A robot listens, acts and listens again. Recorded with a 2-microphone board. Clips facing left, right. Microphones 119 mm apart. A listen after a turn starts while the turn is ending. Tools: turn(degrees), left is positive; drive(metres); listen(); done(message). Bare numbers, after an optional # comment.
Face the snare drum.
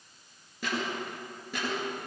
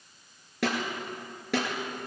turn(-90)
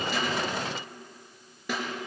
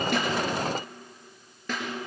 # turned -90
# So it is at 10° left.
turn(10)
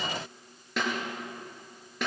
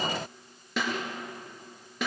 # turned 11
done("Found it: a snare drum, straight ahead.")